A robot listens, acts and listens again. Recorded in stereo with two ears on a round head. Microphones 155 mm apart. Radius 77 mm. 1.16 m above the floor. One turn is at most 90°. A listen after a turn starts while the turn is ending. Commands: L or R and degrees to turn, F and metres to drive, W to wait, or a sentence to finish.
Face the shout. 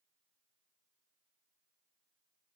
W
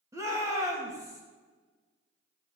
R20
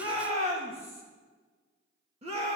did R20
R90
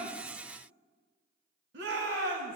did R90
R75
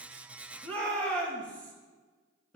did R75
L10
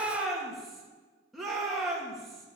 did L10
Facing the shout.